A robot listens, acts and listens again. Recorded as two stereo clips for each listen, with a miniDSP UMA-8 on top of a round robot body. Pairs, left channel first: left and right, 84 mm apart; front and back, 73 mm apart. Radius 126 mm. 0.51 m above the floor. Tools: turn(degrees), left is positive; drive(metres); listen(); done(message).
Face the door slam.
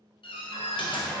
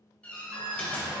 turn(degrees=75)
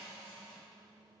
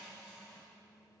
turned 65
turn(degrees=10)
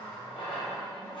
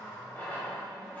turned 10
done("Facing where the door slam came from. I can't hear it now.")